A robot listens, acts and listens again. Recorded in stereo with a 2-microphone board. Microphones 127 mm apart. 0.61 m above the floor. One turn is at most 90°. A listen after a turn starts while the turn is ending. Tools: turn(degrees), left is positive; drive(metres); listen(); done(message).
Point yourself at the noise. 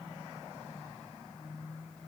listen()
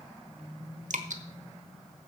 turn(degrees=-90)
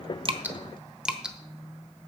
done("Found it: dripping, straight ahead, 1 to 2 m away.")